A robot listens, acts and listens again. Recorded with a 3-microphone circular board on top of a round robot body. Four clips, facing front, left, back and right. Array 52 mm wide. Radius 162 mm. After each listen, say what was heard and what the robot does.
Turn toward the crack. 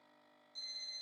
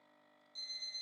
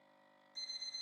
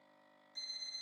Keep listening.
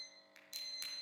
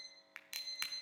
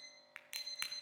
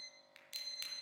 The crack: 135° left. Turn 135° left.
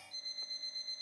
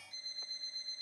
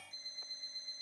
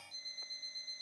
Facing where the crack came from. I can't hear it now.